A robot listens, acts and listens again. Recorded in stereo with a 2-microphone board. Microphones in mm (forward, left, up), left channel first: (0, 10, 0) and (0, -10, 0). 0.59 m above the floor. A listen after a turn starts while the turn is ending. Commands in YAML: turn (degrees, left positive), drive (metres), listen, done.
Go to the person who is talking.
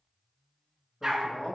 turn: 55
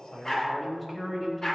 drive: 1.0
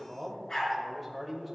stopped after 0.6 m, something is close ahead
done: "Blocked. The man speaking is further on, straight ahead."